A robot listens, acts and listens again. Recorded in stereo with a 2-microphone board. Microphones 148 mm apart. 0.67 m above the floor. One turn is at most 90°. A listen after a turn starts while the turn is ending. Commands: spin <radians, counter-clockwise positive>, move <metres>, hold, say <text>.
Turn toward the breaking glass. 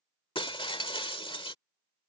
spin 0.61
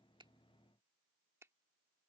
hold
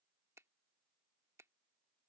say I heard breaking glass, but can't make it out now. It was about straight ahead or 110° left.